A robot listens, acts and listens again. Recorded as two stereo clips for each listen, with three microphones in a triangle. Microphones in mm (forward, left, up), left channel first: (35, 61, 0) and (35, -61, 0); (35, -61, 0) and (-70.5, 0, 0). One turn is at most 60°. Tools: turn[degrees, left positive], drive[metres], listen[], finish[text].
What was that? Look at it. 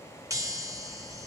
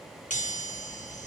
Thought: The chime: 25° right.
Action: turn[-25]
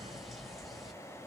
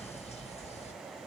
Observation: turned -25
Action: finish[Found it: a chime, straight ahead.]